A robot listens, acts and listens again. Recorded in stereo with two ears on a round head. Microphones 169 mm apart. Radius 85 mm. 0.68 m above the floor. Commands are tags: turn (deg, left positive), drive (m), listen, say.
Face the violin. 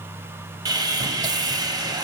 <listen/>
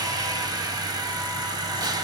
<listen/>
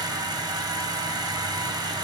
<say>I can't make out a violin, only sawing.</say>